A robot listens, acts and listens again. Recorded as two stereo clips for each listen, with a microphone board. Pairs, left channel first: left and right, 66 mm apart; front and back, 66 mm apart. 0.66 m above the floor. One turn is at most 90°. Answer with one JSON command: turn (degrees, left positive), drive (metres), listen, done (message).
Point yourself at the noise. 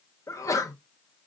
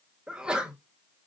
{"turn": 90}
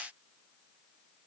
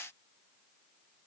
{"turn": 15}
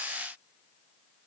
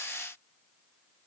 {"done": "I heard a sneeze from this way, but can't make it out now."}